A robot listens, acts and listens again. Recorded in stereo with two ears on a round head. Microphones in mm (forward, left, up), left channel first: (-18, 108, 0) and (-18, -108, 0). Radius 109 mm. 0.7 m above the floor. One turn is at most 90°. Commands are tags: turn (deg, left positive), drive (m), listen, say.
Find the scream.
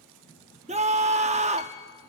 <turn deg="-30"/>
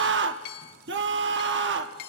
<turn deg="-90"/>
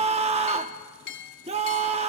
<turn deg="-30"/>
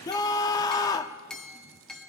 <turn deg="20"/>
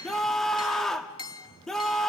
<say>Facing the scream.</say>